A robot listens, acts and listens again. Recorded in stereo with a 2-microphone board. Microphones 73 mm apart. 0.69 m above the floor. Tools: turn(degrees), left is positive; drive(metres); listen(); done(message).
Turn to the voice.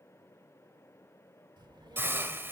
turn(degrees=-90)
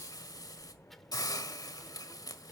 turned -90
done("Facing the child speaking.")